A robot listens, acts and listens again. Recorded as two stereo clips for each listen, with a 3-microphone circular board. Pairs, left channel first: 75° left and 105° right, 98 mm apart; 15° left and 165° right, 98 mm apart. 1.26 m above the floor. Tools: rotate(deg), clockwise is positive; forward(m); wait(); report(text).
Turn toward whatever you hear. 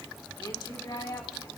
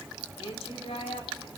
rotate(-25)
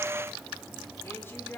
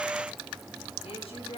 report("Facing the woman speaking.")